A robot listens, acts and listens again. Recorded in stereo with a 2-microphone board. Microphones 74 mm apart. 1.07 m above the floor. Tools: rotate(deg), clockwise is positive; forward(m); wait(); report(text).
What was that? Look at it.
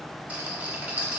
rotate(15)
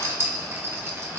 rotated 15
rotate(150)
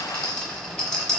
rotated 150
rotate(-10)
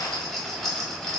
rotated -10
report("Found it: a rattle, straight ahead, under 1 m away.")